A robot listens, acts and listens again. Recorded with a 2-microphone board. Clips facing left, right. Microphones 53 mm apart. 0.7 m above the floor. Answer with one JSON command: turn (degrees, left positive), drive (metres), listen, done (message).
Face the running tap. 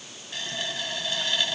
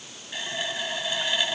{"turn": -30}
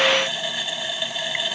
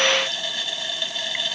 {"turn": 15}
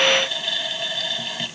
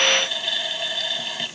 {"done": "Facing the running tap."}